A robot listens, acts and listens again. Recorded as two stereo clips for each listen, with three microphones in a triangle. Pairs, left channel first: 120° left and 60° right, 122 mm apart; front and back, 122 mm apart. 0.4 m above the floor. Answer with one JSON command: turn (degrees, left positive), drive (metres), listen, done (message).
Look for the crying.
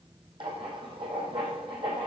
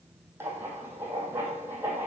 {"listen": true}
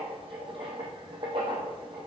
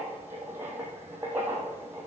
{"listen": true}
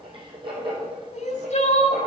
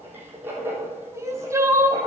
{"turn": 115}
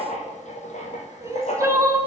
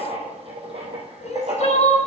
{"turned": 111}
{"done": "Found it: crying, straight ahead, 2 to 4 m away."}